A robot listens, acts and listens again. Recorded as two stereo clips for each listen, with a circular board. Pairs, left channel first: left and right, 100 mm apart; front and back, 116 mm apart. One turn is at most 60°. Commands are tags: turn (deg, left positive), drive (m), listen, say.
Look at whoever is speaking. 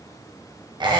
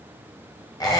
<listen/>
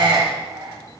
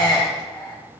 <listen/>
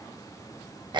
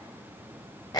<say>I can't make out anyone speaking, only a squeak.</say>